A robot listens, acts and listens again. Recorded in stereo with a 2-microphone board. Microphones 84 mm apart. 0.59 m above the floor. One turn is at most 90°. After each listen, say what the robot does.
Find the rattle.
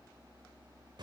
Keep listening.
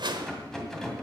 Turn 30° left.
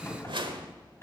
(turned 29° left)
Turn 90° left.
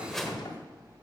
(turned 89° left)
Turn 55° left.
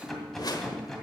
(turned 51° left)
Found it: a rattle, straight ahead.